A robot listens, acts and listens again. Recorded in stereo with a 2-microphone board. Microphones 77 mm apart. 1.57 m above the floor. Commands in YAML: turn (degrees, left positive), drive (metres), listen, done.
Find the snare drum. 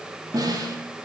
turn: -50
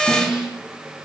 done: "Facing the snare drum."